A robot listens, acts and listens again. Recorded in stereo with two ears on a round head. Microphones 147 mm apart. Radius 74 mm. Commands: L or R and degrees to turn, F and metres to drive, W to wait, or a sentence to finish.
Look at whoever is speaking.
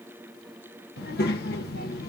L65
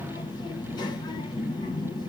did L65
L30
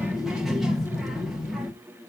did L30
Found it: a child speaking, straight ahead, 1 to 2 m away.